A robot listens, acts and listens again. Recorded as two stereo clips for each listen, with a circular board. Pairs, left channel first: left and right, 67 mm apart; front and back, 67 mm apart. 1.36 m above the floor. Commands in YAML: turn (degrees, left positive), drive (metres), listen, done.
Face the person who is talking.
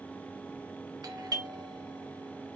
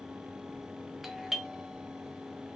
listen: true
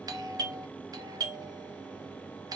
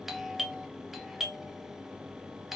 listen: true
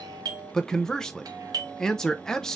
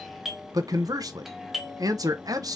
turn: 170
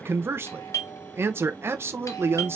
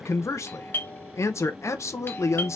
turn: -40
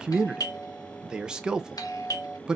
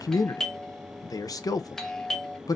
turn: -10
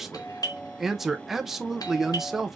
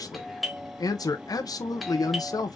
done: "Facing the man speaking."